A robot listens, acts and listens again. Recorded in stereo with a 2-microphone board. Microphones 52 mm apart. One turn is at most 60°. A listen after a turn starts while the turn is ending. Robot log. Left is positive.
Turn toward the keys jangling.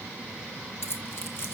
note: The keys jangling: about 50° left or 130° left.
cmd yaw +50
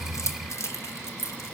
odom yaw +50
note: So it is at 80° left.
cmd yaw +60
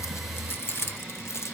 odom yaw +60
note: The keys jangling is now 65° left.
cmd yaw +60
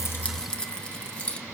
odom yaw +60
note: The keys jangling is now 25° left.
cmd yaw +25
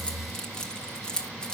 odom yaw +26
note: The keys jangling is now 15° left.
cmd yaw +15
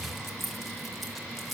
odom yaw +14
end: Found it: keys jangling, straight ahead.